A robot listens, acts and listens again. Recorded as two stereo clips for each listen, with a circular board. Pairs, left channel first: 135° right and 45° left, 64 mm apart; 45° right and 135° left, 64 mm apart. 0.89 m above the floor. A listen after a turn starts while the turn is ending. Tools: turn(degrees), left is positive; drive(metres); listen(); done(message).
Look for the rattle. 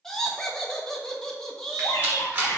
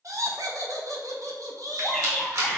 turn(degrees=105)
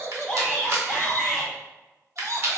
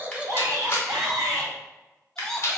done("Facing the rattle, 1 to 2 m away.")